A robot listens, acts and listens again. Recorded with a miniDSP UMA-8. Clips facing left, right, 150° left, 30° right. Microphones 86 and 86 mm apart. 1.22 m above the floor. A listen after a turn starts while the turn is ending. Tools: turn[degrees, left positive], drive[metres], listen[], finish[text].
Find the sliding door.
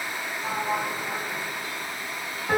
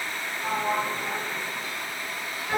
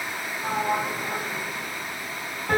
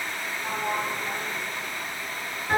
Thought: The sliding door: 165° right.
Action: turn[-165]
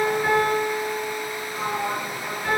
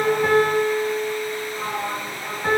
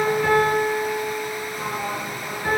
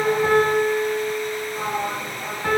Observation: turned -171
Thought: The sliding door is now 10° left.
Action: turn[10]
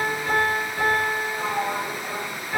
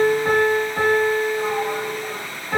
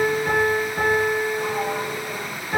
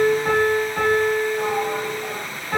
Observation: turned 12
Action: finish[Facing the sliding door, over 4 m away.]